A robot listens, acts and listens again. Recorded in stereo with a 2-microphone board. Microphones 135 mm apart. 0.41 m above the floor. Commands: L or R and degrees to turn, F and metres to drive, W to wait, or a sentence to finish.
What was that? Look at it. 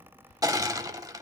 R25
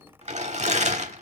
R125
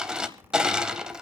Facing the crushing.